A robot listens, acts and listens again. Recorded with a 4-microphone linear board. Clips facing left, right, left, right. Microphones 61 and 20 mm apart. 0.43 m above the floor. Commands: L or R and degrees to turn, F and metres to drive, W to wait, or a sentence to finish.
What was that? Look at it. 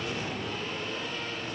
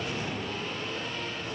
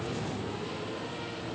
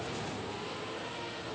W
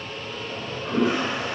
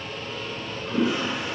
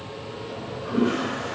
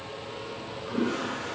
L55
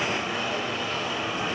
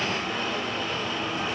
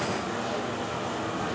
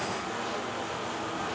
L10
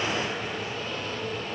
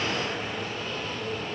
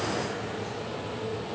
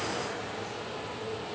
W
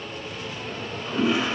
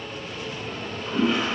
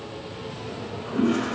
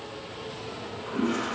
Found it: a toilet flushing, straight ahead, 1 to 2 m away.